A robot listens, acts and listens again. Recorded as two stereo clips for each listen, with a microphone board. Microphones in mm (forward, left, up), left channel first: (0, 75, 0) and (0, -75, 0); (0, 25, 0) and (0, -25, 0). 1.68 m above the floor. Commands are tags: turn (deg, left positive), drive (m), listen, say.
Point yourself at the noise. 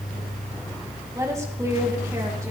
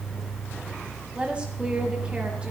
<turn deg="-20"/>
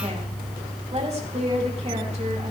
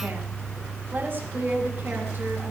<turn deg="-140"/>
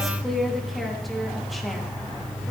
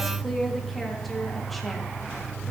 <say>Facing the woman speaking.</say>